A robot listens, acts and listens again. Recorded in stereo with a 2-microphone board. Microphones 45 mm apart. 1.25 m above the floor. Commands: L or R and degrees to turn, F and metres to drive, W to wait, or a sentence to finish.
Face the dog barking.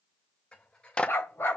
L60
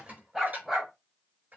Found it: a dog barking, straight ahead, 2 to 4 m away.